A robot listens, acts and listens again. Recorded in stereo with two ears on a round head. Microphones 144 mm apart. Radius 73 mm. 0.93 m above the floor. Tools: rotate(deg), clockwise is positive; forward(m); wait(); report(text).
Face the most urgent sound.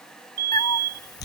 rotate(70)
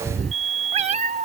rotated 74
rotate(40)
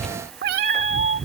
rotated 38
wait()
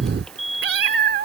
report("Found it: a fire alarm, straight ahead.")